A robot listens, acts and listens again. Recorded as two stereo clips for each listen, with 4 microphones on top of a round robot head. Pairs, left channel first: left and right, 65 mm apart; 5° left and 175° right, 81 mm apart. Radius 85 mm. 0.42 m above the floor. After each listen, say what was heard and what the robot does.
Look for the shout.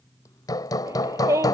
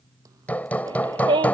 The shout: 140° right. Turn 140° right.
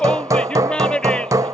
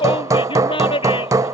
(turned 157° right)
The shout is now 15° left. Turn 15° left.
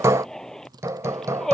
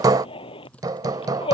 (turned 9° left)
The shout is now 10° left. Turn 10° left.
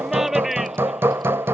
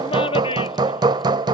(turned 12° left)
Found it: a shout, straight ahead.